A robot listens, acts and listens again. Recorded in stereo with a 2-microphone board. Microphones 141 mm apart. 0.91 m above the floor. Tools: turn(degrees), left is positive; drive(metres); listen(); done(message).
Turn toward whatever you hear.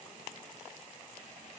listen()
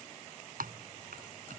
turn(degrees=-90)
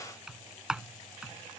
done("Facing the typing on a keyboard.")